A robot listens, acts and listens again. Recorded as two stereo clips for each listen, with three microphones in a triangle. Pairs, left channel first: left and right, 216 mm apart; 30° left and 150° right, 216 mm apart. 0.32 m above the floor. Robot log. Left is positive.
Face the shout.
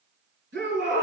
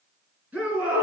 note: The shout: 65° right.
cmd yaw -65
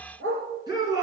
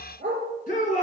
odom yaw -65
note: The shout is now 20° right.
cmd yaw -20
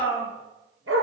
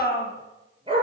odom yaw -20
end: Facing the shout.